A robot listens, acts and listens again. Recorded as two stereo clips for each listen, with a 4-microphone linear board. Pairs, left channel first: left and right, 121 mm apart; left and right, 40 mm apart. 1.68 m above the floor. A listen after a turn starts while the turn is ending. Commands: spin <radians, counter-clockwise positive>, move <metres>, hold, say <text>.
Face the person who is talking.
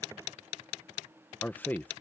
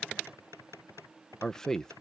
spin 0.52
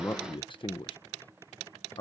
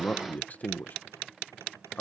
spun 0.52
spin 2.27
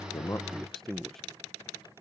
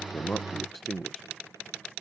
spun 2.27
say Found it: a man speaking, straight ahead.